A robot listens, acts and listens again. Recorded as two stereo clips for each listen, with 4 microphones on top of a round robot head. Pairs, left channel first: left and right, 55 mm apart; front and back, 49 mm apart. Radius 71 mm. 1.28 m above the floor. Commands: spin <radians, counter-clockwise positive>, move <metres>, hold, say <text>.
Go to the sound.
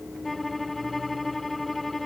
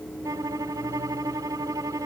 spin 3.05
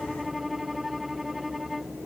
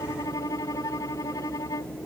move 1.0
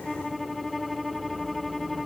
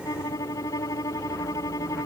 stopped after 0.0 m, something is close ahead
say Something is in my way. I am facing the violin but have not reached it.